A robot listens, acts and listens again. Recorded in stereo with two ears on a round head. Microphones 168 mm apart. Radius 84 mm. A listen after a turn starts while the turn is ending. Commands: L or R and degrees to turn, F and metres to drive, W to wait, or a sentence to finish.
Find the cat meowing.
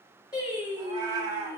R25
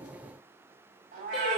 R135
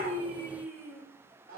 R45
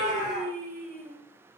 Facing the cat meowing.